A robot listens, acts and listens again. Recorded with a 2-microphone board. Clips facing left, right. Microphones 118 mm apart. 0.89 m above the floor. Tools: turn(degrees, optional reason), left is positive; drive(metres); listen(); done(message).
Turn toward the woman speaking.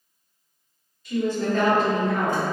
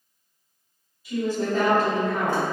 turn(degrees=-30)
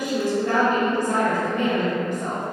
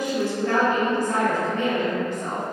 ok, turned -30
turn(degrees=20, reason="So it is at 20° left.")
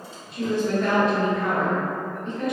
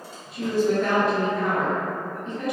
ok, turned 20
done("Facing the woman speaking.")